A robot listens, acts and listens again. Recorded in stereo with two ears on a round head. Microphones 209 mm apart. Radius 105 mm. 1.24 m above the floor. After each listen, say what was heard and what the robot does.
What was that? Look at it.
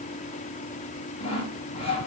The sawing: about 25° left or 155° left. Turn 25° left.
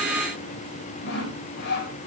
So it is at 125° left. Turn 125° left.
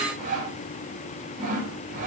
The sawing is now 35° right. Turn 35° right.
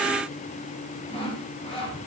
The sawing is now 25° left. Turn 25° left.
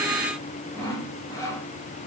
The sawing is now 15° left. Turn 15° left.
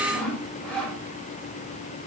Facing the sawing.